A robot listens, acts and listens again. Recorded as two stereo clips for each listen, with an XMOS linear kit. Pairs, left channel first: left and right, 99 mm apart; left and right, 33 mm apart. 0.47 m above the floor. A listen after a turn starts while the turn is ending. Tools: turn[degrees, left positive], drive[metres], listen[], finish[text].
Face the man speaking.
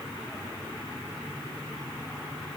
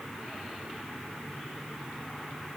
Action: listen[]
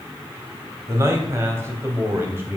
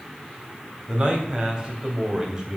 Thought: The man speaking: about 20° right or 160° right.
Action: turn[-20]
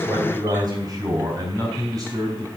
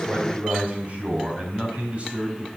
Thought: The man speaking: about 35° right or 145° right.
Action: turn[-35]
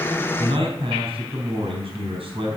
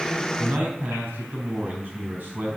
Thought: So it is at 115° right.
Action: turn[-115]
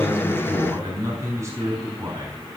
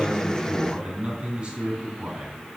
Thought: The man speaking is now 30° right.
Action: turn[-30]
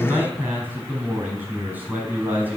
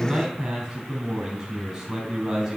Thought: The man speaking is now 20° right.
Action: turn[-20]
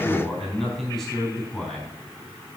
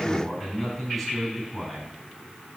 Action: finish[Found it: a man speaking, straight ahead.]